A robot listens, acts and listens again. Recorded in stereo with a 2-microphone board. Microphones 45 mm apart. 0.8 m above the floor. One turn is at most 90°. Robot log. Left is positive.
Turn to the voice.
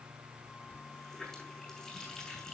cmd idle
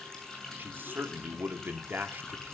note: The man speaking: about 50° right or 130° right.
cmd yaw -50
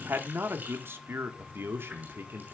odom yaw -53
note: So it is at 70° right.
cmd yaw -70
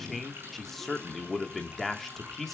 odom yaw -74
end: Facing the man speaking.